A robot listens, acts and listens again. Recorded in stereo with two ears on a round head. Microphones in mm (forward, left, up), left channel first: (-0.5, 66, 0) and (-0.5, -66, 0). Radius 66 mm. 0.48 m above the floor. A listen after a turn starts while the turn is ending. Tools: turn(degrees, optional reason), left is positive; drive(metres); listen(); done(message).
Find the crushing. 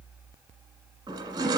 turn(degrees=-30, reason="The crushing: about 30° right or 150° right.")
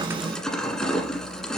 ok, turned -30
done("Found it: crushing, straight ahead.")